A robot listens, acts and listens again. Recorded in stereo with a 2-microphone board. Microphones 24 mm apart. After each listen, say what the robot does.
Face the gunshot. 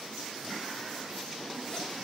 Keep listening.
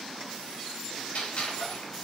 Turn 70° left.
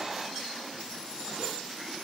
Keep listening.
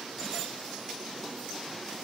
I heard a gunshot, but can't make it out now. It was about straight ahead or 40° left.